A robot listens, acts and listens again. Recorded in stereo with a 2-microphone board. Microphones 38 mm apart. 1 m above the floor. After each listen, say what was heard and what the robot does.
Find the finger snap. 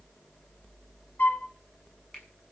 Turn 30° left.
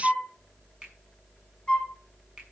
Keep listening.
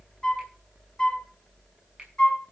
Keep listening.
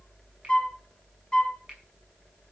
I heard a finger snap, but can't make it out now. It was about 20° right or 140° left.